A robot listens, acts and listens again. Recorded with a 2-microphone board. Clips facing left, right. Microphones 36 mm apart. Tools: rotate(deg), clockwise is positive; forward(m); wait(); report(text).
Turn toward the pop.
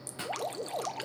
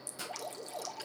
rotate(-40)
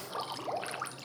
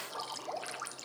wait()
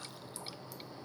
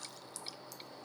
report("I heard a pop, but can't make it out now. It was about straight ahead or 100° left.")